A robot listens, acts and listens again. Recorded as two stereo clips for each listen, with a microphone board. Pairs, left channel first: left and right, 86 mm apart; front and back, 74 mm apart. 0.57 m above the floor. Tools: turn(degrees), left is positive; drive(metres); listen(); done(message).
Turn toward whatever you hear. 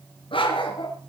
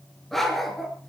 turn(degrees=95)
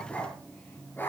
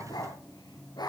turn(degrees=25)
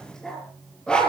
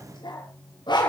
turn(degrees=10)
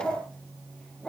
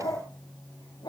turn(degrees=10)
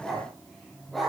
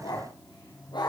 done("Facing the dog barking.")